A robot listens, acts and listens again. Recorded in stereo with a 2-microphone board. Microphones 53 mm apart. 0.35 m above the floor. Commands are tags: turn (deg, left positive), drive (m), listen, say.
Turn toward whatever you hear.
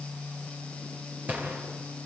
<turn deg="-30"/>
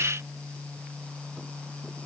<listen/>
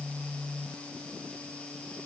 <say>I heard a gunshot, but can't make it out now. It was about straight ahead or 120° right.</say>